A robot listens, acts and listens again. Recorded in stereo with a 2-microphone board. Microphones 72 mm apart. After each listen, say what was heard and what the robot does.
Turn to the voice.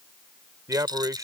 The man speaking: about 50° right or 130° right. Turn 50° right.
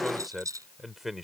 Facing the man speaking.